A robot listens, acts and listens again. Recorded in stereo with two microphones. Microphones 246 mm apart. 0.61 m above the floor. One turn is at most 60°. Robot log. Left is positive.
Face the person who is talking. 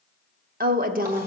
note: The woman speaking: about 35° right or 145° right.
cmd yaw -35
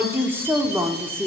note: So it is at 10° right.
cmd yaw -10
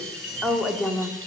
end: Found it: a woman speaking, straight ahead, 1 to 2 m away.